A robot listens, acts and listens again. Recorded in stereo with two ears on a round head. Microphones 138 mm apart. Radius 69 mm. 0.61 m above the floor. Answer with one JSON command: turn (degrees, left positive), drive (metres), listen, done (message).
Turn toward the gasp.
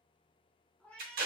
{"listen": true}
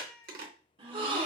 {"turn": -35}
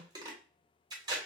{"listen": true}
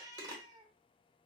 {"done": "I heard a gasp, but can't make it out now. It was about straight ahead or 110° right."}